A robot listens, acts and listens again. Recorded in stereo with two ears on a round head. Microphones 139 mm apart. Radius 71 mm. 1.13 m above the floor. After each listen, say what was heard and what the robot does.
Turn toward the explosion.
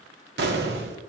The explosion: about 70° right or 110° right. Turn 70° right.
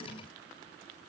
Keep listening.
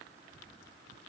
I heard an explosion, but can't make it out now. It was about straight ahead or 40° right.